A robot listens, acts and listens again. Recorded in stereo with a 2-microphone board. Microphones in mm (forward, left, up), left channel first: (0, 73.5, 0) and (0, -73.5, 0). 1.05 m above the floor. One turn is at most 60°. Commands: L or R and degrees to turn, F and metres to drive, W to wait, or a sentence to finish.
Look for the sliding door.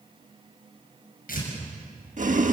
W
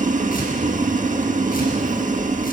W
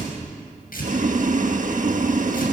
I can't make out a sliding door to turn to.